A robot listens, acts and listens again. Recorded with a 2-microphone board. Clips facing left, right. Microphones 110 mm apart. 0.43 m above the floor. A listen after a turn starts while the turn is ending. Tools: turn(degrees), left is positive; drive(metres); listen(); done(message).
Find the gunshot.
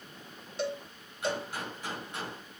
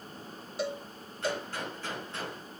turn(degrees=30)
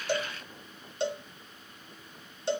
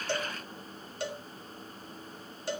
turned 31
listen()
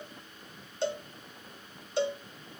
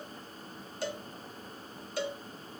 done("I heard a gunshot, but can't make it out now. It was about 20° right or 135° left.")